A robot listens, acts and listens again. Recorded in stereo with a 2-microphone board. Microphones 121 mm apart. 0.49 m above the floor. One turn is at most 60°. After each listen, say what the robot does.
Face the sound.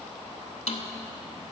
Turn 60° left.
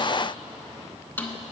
Turn 15° left.
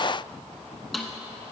Facing the snare drum, under 1 m away.